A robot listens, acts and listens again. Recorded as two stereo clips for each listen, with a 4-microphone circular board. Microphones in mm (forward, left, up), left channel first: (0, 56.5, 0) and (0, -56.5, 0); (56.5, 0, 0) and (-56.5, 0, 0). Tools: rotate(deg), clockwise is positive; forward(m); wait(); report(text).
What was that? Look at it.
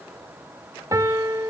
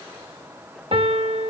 rotate(150)
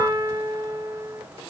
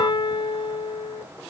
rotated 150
rotate(40)
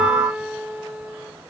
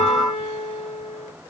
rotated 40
rotate(10)
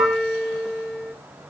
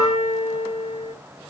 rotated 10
report("Found it: a piano, straight ahead.")